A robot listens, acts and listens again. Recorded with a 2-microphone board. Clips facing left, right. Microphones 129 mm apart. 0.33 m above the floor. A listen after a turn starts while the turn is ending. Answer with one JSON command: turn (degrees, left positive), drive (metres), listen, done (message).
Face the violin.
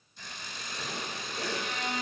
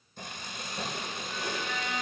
{"turn": 50}
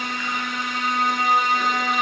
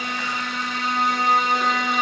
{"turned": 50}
{"done": "Facing the violin."}